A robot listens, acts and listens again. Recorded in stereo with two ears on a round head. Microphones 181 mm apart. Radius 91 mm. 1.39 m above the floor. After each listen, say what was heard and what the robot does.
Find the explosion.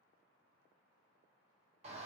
Keep listening.
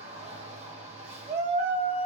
Keep listening.
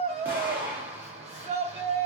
Turn 30° right.
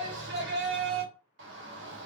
Keep listening.
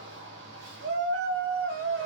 I heard an explosion, but can't make it out now. It was about 20° left or 140° right.